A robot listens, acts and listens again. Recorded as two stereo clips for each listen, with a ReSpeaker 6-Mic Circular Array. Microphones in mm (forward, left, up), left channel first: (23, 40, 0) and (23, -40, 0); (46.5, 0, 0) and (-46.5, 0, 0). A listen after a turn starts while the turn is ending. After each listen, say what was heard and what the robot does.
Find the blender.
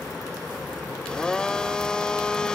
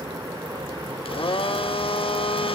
The blender: 10° left. Turn 10° left.
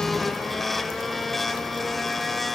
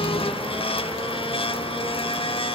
Found it: a blender, straight ahead, under 1 m away.